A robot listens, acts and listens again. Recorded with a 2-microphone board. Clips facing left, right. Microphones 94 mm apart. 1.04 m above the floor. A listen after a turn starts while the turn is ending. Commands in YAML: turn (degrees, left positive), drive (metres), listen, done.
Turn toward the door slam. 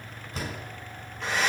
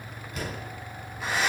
turn: 35
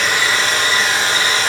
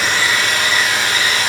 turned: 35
listen: true
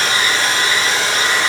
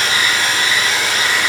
done: "I heard a door slam, but can't make it out now. It was about straight ahead or 110° left."